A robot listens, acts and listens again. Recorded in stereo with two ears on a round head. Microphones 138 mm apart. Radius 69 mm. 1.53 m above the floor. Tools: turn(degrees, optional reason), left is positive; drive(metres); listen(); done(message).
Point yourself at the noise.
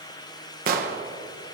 turn(degrees=-60, reason="The explosion: about 60° right or 120° right.")
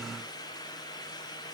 listen()
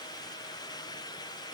done("I heard an explosion, but can't make it out now. It was about straight ahead or 60° right.")